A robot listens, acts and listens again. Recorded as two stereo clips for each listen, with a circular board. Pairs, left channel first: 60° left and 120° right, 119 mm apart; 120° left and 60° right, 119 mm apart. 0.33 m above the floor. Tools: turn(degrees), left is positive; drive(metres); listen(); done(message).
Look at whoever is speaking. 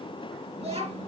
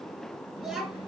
turn(degrees=-145)
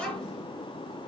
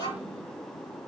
turn(degrees=-20)
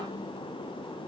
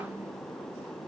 listen()
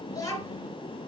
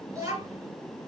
done("Found it: a child speaking, straight ahead.")